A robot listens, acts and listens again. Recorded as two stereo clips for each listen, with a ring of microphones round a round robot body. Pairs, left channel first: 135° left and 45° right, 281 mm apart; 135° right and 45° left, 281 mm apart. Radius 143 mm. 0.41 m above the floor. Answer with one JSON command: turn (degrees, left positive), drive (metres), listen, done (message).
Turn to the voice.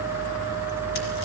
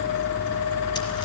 {"listen": true}
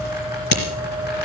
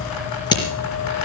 {"listen": true}
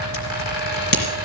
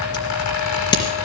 {"done": "I can't make out anyone speaking to turn to."}